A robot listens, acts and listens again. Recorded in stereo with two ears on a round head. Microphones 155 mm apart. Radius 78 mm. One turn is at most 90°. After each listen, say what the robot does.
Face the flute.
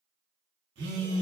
Keep listening.
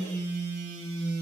Keep listening.
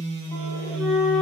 Turn 30° left.
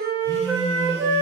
Turn 20° right.
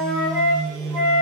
Found it: a flute, straight ahead.